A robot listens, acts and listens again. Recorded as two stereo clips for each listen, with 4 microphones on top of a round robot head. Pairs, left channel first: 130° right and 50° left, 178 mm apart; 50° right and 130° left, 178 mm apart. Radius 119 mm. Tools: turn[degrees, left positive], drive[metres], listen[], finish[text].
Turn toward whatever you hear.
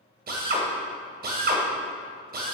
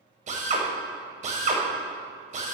Thought: The drill: 85° left.
Action: turn[85]
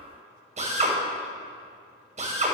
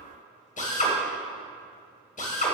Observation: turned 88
Action: finish[Found it: a drill, straight ahead.]